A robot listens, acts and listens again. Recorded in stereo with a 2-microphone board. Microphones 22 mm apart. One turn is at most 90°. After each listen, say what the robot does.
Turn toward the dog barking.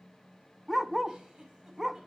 Turn 30° right.
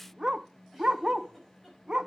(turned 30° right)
Turn 90° right.
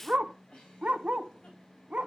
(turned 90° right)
Turn 80° right.
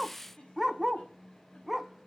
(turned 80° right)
Turn 10° right.
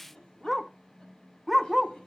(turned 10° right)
Facing the dog barking, under 1 m away.